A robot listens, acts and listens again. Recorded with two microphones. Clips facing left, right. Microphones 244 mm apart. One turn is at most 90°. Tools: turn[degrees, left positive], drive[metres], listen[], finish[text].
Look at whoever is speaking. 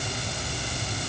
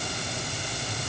Action: listen[]
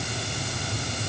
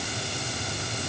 Action: listen[]
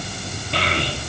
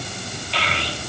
Thought: The child speaking: about 50° left or 130° left.
Action: turn[50]
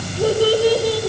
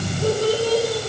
Thought: So it is at 80° left.
Action: turn[80]
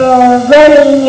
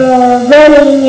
Thought: The child speaking is now 20° right.
Action: turn[-20]
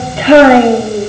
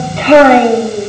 Action: finish[Facing the child speaking.]